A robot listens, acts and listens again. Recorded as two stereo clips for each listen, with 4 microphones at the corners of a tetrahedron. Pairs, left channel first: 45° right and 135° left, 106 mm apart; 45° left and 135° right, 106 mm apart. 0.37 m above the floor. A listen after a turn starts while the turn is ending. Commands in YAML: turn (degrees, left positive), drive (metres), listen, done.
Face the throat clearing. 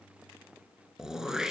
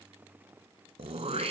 turn: -140
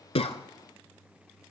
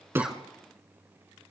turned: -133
listen: true
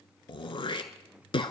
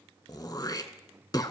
done: "Found it: throat clearing, straight ahead."